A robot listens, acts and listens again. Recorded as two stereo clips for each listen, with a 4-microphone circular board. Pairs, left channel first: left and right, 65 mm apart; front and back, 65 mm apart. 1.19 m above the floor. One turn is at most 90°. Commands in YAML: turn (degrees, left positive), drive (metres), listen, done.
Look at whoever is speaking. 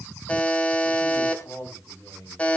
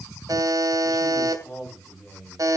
turn: 65
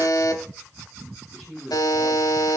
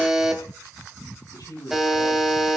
done: "Found it: a man speaking, straight ahead."